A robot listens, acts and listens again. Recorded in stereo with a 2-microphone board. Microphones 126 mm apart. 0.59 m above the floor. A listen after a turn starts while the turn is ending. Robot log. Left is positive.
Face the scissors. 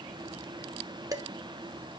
cmd idle
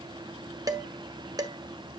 cmd idle
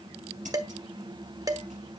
cmd yaw -90
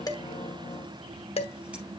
cmd idle
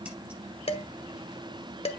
note: The scissors is now 10° right.
cmd yaw -10
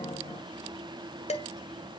cmd idle
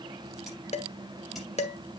cmd idle
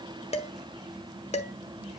end: I heard scissors from this way, but can't make it out now.